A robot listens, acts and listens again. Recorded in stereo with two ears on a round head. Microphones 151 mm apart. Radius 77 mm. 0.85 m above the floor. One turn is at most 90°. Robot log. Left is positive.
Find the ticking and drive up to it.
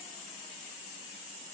cmd idle
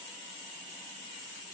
cmd idle
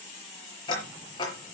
note: The ticking: about 25° left or 155° left.
cmd yaw +25
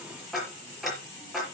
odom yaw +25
cmd fwd 1.0
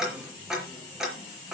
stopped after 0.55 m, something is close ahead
end: Blocked. The ticking is further on, straight ahead.